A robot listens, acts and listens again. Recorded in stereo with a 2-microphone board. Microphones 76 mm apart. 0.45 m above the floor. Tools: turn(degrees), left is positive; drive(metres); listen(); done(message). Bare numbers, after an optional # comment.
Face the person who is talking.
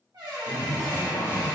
# The man speaking: about 35° left or 145° left.
turn(35)
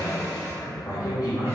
# So it is at 105° left.
turn(105)
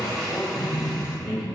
done("Found it: a man speaking, straight ahead.")